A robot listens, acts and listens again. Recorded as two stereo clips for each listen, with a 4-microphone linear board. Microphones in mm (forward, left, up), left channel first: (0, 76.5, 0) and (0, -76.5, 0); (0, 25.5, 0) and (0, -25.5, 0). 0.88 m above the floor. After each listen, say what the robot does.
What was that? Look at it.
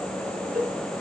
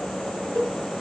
Turn 75° right.
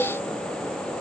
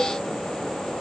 Keep listening.
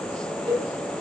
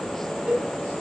Turn 30° right.
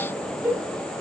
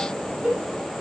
Turn 10° right.
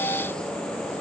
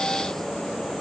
Keep listening.
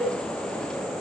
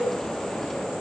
Found it: a cowbell, straight ahead, 2 to 4 m away.